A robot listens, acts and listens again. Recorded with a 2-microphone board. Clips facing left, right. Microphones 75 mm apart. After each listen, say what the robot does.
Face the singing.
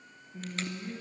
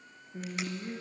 Turn 50° right.
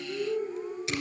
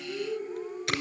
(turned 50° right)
Facing the singing.